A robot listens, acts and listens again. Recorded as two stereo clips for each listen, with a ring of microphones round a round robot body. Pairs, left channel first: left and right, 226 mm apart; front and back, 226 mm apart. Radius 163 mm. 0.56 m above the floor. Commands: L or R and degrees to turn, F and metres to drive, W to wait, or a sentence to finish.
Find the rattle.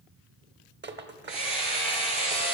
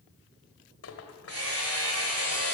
R45
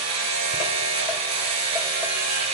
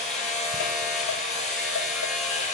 W
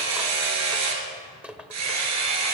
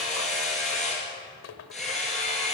Facing the rattle.